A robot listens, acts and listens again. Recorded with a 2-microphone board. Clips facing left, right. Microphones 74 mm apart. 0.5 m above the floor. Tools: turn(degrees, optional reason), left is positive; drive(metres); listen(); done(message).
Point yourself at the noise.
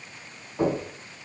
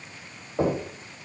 turn(degrees=-55, reason="The knocking: about 55° right or 125° right.")
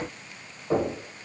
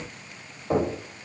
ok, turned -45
turn(degrees=-20, reason="So it is at 20° right.")
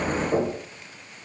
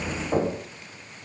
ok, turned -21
done("Facing the knocking.")